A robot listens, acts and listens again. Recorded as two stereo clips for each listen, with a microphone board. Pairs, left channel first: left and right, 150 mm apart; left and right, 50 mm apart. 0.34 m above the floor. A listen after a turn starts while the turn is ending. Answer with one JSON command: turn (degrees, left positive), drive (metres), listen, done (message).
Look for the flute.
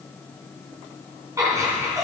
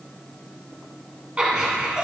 {"listen": true}
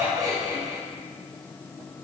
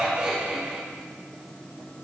{"listen": true}
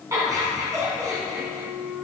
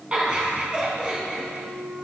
{"turn": 30}
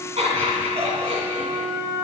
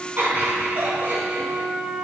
{"turn": -20}
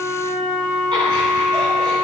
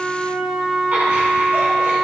{"done": "Facing the flute, 1 to 2 m away."}